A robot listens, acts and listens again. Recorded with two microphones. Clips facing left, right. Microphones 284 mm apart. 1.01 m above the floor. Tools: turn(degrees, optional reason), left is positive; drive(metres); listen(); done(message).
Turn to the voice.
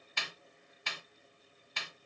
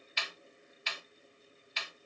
listen()
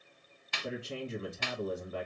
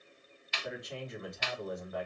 turn(degrees=30, reason="The man speaking: about 30° left or 150° left.")
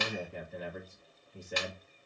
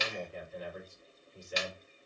turn(degrees=120, reason="So it is at 120° left.")
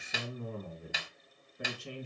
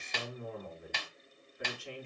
turn(degrees=45, reason="The man speaking is now 45° left.")
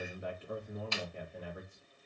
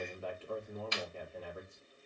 turn(degrees=20, reason="The man speaking is now 20° left.")
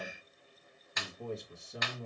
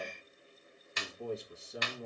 done("Facing the man speaking, 1 to 2 m away.")